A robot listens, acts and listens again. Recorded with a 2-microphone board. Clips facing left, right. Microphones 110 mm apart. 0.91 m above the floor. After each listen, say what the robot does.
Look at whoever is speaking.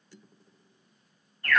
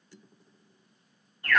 Keep listening.
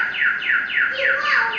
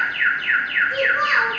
Turn 35° right.
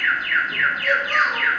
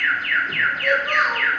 Keep listening.
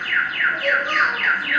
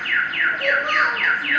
Turn 105° right.
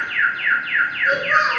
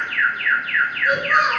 Turn 10° right.
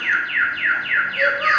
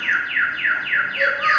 Keep listening.
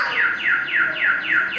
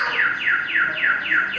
Keep listening.
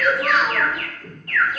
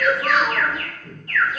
Facing the child speaking.